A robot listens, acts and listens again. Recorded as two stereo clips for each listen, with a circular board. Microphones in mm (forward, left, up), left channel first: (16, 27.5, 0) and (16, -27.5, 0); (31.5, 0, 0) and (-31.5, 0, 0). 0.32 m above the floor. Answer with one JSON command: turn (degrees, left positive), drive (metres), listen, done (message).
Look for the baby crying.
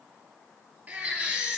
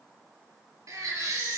{"turn": -150}
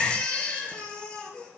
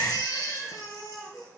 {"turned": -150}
{"turn": 20}
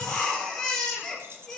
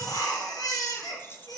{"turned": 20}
{"turn": 10}
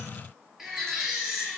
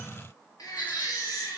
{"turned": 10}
{"done": "Found it: a baby crying, straight ahead, over 4 m away."}